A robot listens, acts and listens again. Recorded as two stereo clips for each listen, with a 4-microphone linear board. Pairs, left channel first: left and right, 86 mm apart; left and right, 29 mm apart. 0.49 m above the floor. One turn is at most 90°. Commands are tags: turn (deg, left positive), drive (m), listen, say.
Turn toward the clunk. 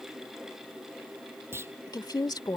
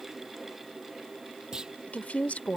<turn deg="-25"/>
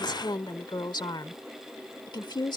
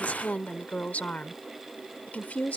<listen/>
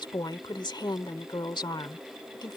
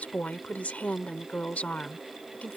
<say>I heard a clunk, but can't make it out now. It was about straight ahead or 130° right.</say>